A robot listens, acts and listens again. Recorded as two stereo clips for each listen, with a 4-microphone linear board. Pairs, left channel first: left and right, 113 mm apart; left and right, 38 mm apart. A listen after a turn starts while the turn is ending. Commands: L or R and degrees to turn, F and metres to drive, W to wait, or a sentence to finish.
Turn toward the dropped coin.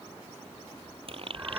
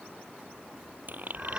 R55
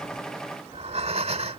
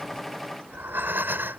W
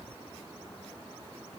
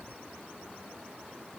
I heard a dropped coin, but can't make it out now. It was about straight ahead or 70° right.